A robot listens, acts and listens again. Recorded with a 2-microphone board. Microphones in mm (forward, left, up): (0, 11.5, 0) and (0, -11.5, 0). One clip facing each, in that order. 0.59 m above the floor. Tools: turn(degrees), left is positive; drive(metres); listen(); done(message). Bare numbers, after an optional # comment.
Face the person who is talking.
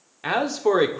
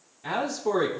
# The man speaking: about 60° left or 120° left.
turn(60)
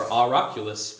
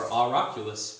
# So it is at 30° left.
turn(30)
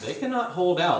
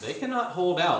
done("Found it: a man speaking, straight ahead.")